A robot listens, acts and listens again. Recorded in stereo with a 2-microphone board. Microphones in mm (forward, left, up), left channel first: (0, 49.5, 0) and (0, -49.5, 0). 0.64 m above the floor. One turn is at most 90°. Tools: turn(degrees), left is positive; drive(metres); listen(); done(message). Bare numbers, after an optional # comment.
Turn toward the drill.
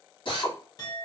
# The drill: about 55° left or 125° left.
turn(55)
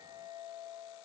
listen()
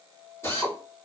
# So it is at 35° left.
turn(35)
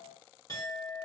listen()
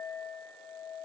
listen()
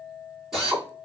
done("Facing the drill, 1 to 2 m away.")